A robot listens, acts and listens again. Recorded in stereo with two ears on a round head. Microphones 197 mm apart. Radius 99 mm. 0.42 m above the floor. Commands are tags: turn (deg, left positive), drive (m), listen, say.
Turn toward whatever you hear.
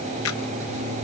<turn deg="65"/>
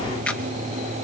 <say>Facing the camera shutter.</say>